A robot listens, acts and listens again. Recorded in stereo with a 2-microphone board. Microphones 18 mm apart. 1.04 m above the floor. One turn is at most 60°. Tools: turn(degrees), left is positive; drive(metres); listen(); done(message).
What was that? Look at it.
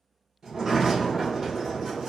turn(degrees=-30)
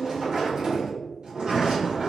turn(degrees=-60)
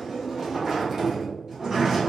turn(degrees=-50)
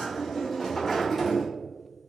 turn(degrees=10)
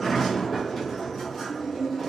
done("Found it: a sliding door, straight ahead, 1 to 2 m away.")